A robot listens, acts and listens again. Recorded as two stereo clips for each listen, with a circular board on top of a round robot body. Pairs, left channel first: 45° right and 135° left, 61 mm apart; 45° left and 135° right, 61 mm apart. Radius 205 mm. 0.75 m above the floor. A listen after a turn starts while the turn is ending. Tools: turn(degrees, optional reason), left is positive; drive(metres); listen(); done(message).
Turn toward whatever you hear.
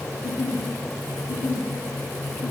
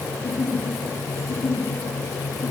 turn(degrees=-15, reason="The giggle: 15° right.")
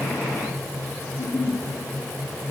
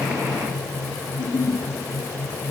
done("Facing the giggle, 1 to 2 m away.")